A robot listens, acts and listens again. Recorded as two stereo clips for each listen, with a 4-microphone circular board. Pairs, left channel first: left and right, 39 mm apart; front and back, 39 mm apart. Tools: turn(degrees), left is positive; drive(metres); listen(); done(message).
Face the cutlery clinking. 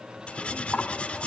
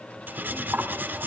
turn(degrees=150)
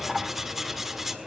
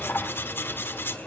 done("Facing the cutlery clinking, 1 to 2 m away.")